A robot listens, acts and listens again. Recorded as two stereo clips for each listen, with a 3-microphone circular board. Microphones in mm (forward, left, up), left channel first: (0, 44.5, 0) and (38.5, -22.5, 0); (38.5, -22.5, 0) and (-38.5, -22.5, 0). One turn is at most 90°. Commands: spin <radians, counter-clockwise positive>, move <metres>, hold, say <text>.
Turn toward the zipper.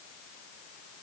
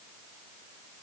hold
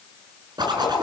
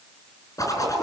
spin -0.70
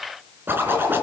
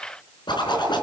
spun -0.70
say Found it: a zipper, straight ahead, over 4 m away.